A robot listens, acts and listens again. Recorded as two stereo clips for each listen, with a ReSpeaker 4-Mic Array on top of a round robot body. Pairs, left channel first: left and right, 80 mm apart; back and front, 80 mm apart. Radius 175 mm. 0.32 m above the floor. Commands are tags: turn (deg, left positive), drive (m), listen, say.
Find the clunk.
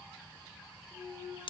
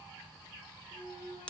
<turn deg="-160"/>
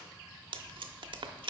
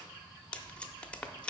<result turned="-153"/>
<turn deg="-10"/>
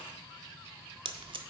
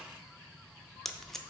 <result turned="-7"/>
<say>Facing where the clunk came from. I can't hear it now.</say>